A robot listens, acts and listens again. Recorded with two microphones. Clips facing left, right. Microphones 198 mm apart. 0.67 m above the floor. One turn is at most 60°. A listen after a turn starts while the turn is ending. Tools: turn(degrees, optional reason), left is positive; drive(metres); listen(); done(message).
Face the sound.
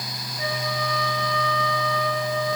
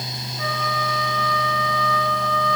turn(degrees=25, reason="The flute: about 25° left or 155° left.")
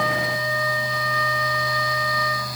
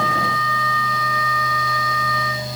turn(degrees=60, reason="So it is at 130° left.")
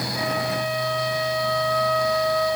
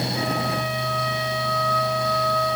turn(degrees=60, reason="The flute is now 90° left.")
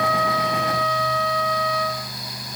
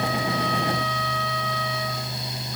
turn(degrees=45, reason="The flute is now 45° left.")
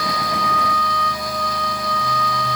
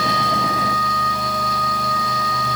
done("Found it: a flute, straight ahead.")